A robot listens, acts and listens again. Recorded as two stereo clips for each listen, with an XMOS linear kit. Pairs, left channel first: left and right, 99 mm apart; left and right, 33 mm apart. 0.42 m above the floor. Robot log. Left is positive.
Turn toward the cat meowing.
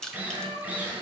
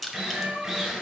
cmd yaw -90
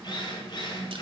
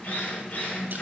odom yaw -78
note: Nothing new. It was at 10° right.
cmd yaw -10
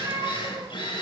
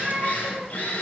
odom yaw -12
note: The cat meowing is now 35° right.
cmd yaw -35
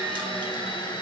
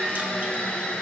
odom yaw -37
cmd idle
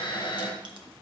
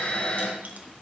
cmd idle
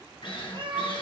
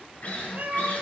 note: The cat meowing is now 55° right.
cmd yaw -55
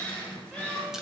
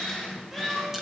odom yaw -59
end: Found it: a cat meowing, straight ahead, 2 to 4 m away.